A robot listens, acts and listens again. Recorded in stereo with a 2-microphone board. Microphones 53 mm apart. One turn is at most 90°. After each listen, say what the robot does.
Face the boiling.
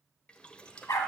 Turn 20° left.
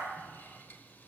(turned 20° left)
Keep listening.
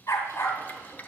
Turn 90° left.
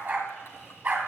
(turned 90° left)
Turn 55° left.
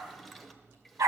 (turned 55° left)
Found it: boiling, straight ahead.